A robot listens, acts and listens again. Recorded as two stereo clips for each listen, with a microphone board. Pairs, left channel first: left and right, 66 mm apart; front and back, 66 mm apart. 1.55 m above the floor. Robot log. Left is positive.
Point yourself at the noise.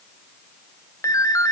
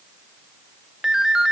note: The ringtone: 100° left.
cmd yaw +100
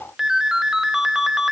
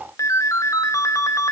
note: The ringtone is now 10° right.
cmd yaw -10
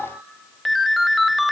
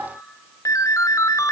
end: Facing the ringtone, under 1 m away.